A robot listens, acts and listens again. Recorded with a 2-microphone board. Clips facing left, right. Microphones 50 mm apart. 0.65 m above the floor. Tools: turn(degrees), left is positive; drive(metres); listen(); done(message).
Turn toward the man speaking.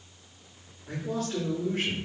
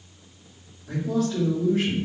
turn(degrees=55)
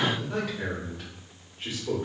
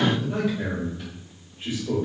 turn(degrees=65)
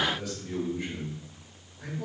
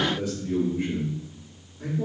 turn(degrees=-30)
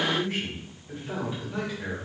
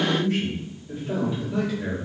turn(degrees=15)
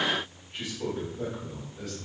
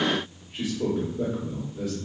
turn(degrees=-10)
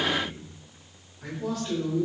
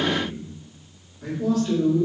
done("Found it: a man speaking, straight ahead, 1 to 2 m away.")